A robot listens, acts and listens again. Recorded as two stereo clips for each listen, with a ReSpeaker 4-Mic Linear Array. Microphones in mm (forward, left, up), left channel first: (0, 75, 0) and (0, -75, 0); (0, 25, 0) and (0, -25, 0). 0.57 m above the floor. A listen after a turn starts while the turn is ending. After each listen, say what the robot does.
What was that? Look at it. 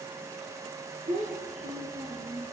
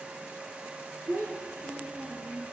Turn 55° right.
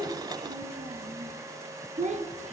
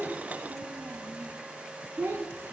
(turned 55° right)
Turn 55° right.
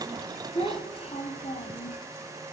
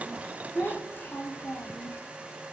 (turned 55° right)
Turn 50° left.
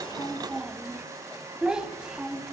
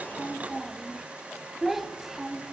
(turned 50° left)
Facing the child speaking, 1 to 2 m away.